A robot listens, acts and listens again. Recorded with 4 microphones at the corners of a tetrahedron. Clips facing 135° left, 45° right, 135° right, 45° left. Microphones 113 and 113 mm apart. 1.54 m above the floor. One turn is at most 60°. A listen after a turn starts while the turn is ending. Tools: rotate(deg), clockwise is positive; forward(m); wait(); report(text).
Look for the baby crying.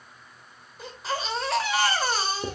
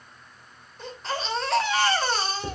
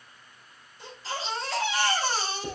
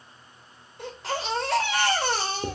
rotate(-50)
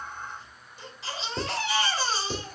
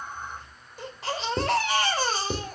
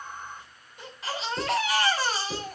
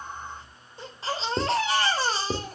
rotate(10)
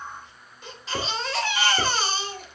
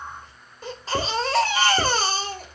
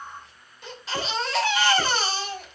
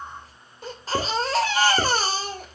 report("Facing the baby crying.")